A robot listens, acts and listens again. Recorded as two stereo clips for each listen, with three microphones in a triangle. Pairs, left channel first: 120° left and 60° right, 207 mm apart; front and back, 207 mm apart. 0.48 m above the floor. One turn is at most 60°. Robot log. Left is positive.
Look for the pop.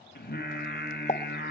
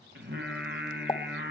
note: The pop: 65° left.
cmd yaw +60
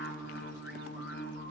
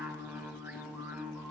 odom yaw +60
end: I heard a pop from this way, but can't make it out now.